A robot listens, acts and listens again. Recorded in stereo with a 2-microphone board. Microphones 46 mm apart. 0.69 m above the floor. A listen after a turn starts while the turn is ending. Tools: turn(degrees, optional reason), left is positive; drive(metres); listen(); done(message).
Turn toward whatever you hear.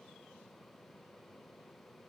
listen()
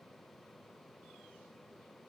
listen()
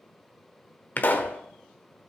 turn(degrees=45, reason="The pop: about 45° left or 135° left.")
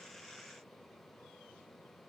listen()
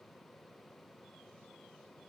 done("I heard a pop, but can't make it out now. It was about straight ahead or 90° left.")